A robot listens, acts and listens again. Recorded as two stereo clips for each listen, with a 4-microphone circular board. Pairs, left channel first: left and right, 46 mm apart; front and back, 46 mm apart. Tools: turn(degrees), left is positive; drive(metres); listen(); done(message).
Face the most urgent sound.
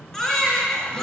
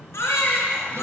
turn(degrees=15)
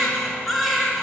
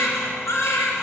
done("Facing the baby crying.")